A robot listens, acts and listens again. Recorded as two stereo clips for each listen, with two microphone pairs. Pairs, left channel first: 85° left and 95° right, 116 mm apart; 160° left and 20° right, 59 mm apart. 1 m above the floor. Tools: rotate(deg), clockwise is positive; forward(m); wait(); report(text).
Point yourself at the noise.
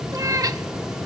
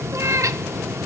rotate(40)
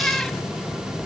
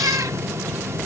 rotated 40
wait()
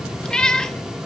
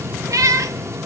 report("Found it: a cat meowing, straight ahead, under 1 m away.")